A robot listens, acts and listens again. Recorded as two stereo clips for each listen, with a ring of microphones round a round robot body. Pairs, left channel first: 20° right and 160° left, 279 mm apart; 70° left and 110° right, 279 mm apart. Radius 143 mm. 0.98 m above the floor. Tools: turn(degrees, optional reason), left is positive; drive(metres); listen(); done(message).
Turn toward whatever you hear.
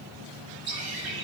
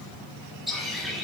turn(degrees=160, reason="The bird: 160° left.")
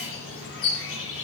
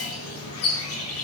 turn(degrees=25, reason="The bird is now 25° left.")
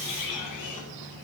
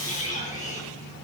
done("Facing the bird.")